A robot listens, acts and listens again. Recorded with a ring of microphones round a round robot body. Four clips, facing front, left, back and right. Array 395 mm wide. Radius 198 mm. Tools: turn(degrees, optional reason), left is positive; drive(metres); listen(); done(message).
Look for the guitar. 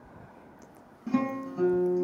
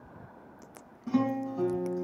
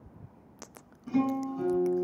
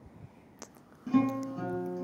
turn(degrees=-35, reason="The guitar: 35° right.")
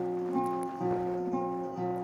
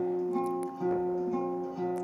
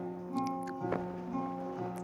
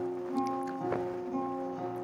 turn(degrees=10, reason="The guitar is now 10° left.")
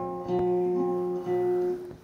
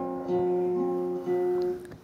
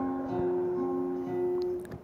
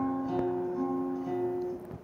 done("Facing the guitar.")